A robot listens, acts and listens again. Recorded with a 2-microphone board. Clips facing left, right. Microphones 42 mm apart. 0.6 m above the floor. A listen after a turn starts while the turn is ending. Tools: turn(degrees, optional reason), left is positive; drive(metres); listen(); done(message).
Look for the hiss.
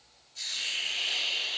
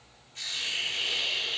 turn(degrees=-45, reason="The hiss: about 45° right or 135° right.")
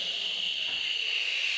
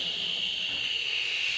done("Found it: a hiss, straight ahead.")